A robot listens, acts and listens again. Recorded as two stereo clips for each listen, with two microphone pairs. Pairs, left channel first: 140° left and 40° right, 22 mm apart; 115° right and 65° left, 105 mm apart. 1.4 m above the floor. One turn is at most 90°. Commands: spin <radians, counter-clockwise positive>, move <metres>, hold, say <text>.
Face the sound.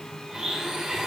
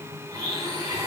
spin 0.17
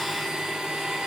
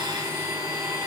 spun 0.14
say Facing the blender, 2 to 4 m away.